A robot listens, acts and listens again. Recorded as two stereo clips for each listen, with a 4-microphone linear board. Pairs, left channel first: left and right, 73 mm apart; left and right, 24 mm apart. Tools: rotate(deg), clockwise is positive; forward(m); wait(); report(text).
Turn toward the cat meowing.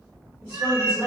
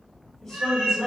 rotate(55)
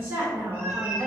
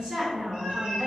wait()
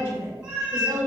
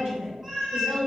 rotate(10)
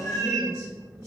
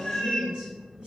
report("Facing the cat meowing.")